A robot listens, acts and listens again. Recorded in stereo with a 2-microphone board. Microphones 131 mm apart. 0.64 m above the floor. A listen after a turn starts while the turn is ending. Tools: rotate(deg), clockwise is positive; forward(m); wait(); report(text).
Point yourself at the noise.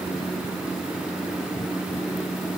wait()
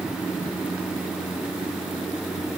wait()
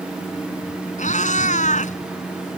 rotate(-70)
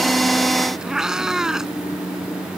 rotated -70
report("Found it: a cat meowing, straight ahead.")